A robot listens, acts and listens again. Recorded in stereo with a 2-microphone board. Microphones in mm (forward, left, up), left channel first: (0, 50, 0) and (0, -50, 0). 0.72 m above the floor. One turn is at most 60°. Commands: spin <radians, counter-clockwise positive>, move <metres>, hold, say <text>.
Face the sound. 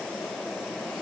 hold
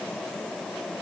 hold
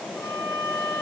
spin 0.44
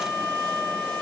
say Found it: a violin, straight ahead, 2 to 4 m away.